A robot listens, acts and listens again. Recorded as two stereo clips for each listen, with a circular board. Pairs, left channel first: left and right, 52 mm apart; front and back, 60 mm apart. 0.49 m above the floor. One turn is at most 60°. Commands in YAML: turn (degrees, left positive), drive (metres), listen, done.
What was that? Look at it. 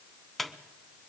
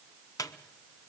done: "Facing the squeak, under 1 m away."